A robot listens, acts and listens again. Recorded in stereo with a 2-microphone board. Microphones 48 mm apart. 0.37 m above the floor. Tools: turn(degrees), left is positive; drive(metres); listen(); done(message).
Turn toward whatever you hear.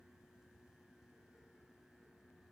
listen()
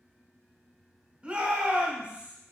turn(degrees=-25)
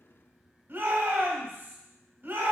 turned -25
turn(degrees=-125)
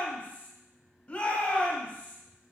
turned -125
turn(degrees=35)
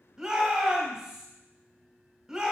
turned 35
turn(degrees=-10)
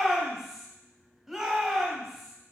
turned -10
done("Facing the shout.")